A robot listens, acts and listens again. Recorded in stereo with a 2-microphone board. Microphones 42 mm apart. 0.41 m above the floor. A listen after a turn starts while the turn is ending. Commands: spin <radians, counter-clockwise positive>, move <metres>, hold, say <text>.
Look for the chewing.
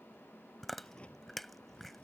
spin 0.52
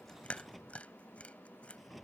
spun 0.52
spin 2.53
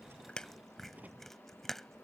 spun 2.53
say Facing the chewing.